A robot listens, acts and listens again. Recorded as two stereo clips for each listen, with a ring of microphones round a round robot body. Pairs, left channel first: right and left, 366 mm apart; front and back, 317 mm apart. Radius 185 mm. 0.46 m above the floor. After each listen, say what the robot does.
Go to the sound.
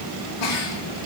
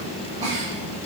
Turn 105° right.
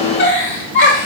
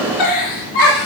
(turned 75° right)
Turn 30° right.
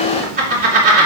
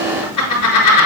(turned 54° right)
Turn 20° left.
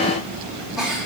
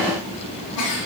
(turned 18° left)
Drive 1.0 m forward.
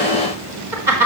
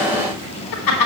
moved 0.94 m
Drive 1.0 m forward.
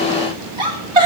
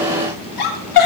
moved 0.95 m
Turn 10° left.
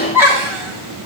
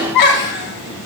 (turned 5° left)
Drive 1.0 m forward.
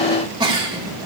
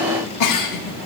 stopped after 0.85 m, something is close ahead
Turn 10° left.
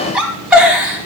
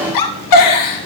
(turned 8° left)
Arrived at the giggle, straight ahead.